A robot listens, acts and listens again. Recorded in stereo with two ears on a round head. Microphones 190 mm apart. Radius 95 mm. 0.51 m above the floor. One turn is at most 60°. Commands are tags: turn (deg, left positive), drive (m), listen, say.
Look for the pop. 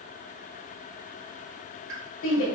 <turn deg="-60"/>
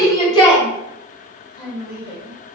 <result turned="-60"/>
<listen/>
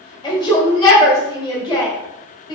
<say>I heard a pop, but can't make it out now. It was about 10° right or 50° right.</say>